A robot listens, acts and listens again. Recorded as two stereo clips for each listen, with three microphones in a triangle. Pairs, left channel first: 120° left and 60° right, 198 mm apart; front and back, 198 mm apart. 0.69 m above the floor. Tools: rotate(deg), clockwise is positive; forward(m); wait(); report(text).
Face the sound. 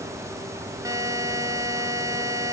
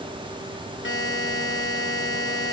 rotate(-15)
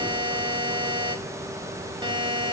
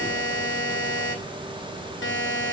report("Found it: a buzzer, straight ahead, 2 to 4 m away.")